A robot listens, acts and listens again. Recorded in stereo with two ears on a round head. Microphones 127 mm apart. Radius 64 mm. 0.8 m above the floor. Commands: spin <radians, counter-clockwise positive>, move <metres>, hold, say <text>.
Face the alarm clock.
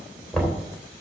hold
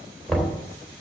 hold
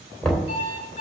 spin 0.96
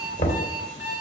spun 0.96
spin 1.13
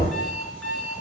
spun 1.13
say Found it: an alarm clock, straight ahead, 2 to 4 m away.